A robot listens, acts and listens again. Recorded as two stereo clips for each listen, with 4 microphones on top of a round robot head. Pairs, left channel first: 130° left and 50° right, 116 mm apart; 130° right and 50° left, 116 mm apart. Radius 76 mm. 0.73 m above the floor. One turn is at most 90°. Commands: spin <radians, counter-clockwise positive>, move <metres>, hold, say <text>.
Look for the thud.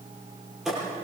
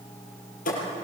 spin -1.57
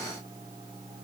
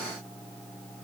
spin -0.79
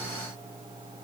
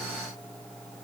say Facing where the thud came from. I can't hear it now.